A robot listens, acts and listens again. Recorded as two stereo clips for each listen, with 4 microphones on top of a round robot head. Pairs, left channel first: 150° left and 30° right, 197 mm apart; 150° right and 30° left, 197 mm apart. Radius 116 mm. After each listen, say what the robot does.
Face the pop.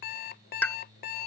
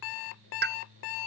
Turn 65° left.
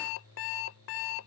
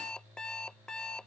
Facing where the pop came from. I can't hear it now.